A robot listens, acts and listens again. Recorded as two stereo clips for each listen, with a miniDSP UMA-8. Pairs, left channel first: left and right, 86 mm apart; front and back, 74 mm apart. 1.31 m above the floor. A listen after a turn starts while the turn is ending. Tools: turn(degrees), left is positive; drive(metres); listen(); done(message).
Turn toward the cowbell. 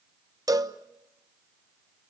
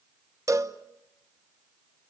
turn(degrees=-135)
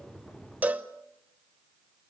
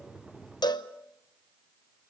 turn(degrees=-20)
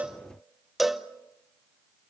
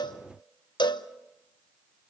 done("Facing the cowbell.")